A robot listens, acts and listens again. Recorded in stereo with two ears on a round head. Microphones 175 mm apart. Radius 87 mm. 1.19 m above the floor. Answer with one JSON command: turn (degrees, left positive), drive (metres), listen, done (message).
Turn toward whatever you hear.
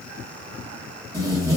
{"turn": -20}
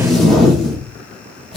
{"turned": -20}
{"done": "Found it: tape being pulled, straight ahead."}